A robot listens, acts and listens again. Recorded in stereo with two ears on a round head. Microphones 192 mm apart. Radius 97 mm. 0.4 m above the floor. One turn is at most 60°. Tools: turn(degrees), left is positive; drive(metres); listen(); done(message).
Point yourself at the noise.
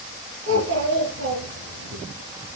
turn(degrees=-60)
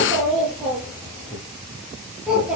done("Found it: a child speaking, straight ahead, over 4 m away.")